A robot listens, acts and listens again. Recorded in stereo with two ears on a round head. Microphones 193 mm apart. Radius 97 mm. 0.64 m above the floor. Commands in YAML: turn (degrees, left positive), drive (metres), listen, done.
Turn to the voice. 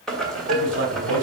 turn: -55
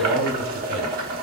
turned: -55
turn: -40
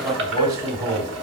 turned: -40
turn: -20
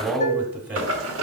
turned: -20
turn: -10
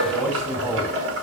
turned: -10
done: "Facing the man speaking, 1 to 2 m away."